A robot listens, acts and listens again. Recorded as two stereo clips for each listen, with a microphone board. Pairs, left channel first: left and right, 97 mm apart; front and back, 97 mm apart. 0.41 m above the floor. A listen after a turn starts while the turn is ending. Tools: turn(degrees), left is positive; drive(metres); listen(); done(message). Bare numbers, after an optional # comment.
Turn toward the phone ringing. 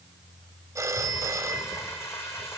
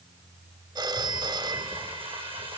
# The phone ringing: 145° right.
turn(-145)
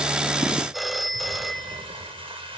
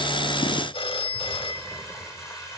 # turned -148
done("Facing the phone ringing.")